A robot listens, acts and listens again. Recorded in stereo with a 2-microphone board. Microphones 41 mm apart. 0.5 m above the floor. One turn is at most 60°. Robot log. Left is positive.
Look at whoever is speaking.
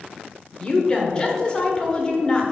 note: The woman speaking: about 25° left or 155° left.
cmd yaw +25
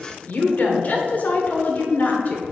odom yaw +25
note: So it is at 120° left.
cmd yaw +60
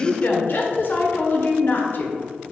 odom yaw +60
note: The woman speaking is now 75° left.
cmd yaw +60
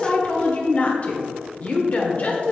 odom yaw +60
note: The woman speaking is now 40° left.
cmd yaw +40
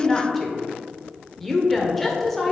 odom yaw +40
end: Facing the woman speaking, 1 to 2 m away.